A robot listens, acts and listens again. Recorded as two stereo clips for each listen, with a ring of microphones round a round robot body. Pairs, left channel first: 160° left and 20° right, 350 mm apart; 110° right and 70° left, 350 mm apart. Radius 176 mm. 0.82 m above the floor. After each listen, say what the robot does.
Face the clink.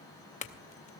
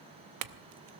Turn 85° left.
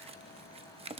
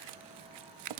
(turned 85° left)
Turn 50° left.
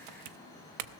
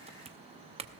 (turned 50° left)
Found it: a clink, straight ahead.